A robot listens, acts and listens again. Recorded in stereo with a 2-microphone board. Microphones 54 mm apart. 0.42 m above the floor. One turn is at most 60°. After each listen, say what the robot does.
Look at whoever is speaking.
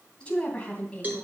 Turn 20° left.
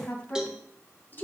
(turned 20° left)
Turn 60° left.
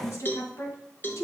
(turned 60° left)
Turn 60° left.
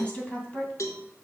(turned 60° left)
Turn 25° left.
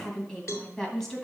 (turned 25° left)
Turn 10° left.
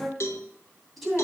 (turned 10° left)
Found it: a woman speaking, straight ahead, 2 to 4 m away.